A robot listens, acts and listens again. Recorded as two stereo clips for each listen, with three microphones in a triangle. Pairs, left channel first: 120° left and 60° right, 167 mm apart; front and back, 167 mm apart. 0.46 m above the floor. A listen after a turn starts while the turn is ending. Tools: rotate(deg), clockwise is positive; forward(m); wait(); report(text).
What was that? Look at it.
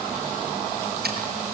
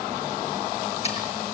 wait()
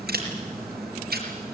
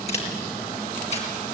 rotate(50)
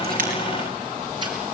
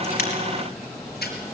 wait()
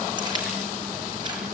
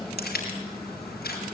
wait()
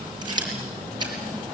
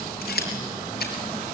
report("Facing the scissors, over 4 m away.")